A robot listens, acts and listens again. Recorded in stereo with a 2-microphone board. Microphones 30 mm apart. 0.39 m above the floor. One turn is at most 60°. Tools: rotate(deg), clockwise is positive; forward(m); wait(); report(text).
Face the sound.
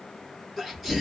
rotate(30)
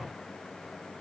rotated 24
wait()
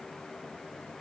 report("I heard a sneeze, but can't make it out now. It was about 20° left or 150° right.")